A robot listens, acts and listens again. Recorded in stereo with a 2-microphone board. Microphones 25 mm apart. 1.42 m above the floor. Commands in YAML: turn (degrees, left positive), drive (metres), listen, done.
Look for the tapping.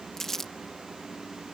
listen: true
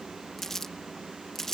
listen: true
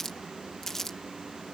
done: "I can't make out tapping to turn to."